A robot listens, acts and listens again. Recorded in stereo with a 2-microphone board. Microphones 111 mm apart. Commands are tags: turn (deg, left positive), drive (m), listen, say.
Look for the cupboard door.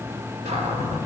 <turn deg="-90"/>
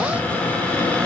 <turn deg="15"/>
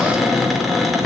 <say>Facing the cupboard door.</say>